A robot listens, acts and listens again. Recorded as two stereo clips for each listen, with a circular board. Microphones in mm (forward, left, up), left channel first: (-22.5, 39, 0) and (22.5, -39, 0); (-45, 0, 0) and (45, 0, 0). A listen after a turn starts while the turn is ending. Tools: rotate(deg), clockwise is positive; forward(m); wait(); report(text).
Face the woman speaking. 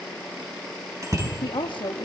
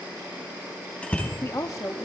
rotate(-130)
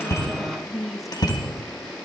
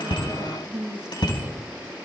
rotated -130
rotate(-30)
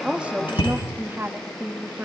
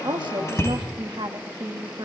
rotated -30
report("Found it: a woman speaking, straight ahead.")